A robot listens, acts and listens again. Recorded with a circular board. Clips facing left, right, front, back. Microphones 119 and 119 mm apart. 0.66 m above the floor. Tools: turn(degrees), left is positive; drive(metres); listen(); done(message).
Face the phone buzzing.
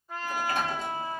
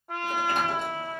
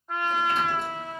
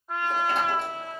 listen()
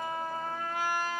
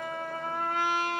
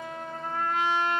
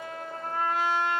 listen()
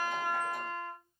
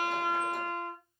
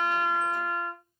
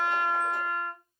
done("I can't make out a phone buzzing, only a trumpet.")